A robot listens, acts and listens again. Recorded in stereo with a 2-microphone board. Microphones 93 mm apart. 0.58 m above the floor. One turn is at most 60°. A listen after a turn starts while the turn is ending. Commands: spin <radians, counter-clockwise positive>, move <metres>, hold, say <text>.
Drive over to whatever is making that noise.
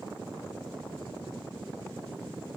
hold
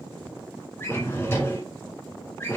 spin 0.52
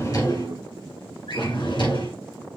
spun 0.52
spin 1.05
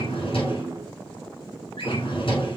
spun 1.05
spin 1.05
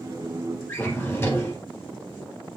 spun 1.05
spin 0.44
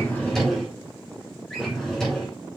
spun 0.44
move 1.0
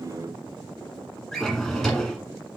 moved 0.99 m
move 1.0
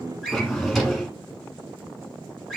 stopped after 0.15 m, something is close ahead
say Arrived at the drawer, straight ahead.